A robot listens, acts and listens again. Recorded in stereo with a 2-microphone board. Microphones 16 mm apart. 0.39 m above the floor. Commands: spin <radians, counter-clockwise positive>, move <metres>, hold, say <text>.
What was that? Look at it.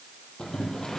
spin 0.79
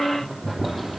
say Facing the boiling, over 4 m away.